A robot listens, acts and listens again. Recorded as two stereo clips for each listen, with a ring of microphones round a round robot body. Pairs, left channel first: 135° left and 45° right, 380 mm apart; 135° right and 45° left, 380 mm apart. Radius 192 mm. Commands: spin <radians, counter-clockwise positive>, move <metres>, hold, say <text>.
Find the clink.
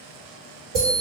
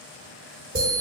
hold
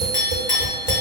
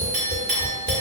spin 1.40
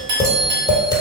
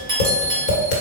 spin -0.52
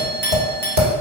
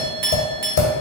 spin 0.35
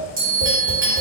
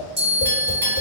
hold
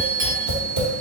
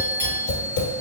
hold
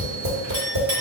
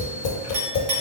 say Found it: a clink, straight ahead, 1 to 2 m away.